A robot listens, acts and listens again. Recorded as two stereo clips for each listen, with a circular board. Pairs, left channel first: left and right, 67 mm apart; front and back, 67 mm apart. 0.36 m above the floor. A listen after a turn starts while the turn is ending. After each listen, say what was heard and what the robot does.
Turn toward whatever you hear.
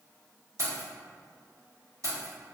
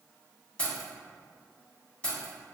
The keys jangling: 70° right. Turn 70° right.
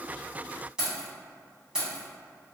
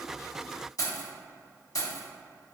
The keys jangling is now 15° right. Turn 15° right.
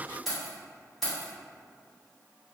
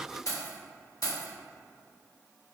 Facing the keys jangling.